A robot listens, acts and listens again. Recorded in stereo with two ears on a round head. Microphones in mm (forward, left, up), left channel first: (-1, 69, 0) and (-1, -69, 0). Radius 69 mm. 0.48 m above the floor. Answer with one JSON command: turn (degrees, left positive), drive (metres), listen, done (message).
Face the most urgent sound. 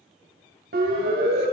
{"turn": -65}
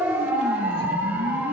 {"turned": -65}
{"turn": -15}
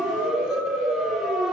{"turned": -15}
{"done": "Facing the siren, 2 to 4 m away."}